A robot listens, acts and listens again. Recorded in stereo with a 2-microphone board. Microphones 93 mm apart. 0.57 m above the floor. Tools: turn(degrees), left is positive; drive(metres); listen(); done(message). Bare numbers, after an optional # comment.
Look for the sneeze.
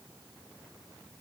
listen()
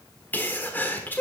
# The sneeze: about 20° left or 160° left.
turn(20)
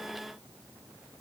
listen()
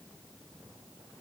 done("I heard a sneeze, but can't make it out now. It was about straight ahead or 140° left.")